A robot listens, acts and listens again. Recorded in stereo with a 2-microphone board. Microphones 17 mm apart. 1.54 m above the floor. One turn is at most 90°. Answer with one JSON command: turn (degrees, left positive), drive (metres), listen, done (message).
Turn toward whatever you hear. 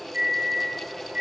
{"turn": -60}
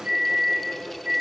{"turn": -60}
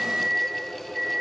{"turn": -10}
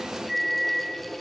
{"done": "Found it: a microwave, straight ahead, 1 to 2 m away."}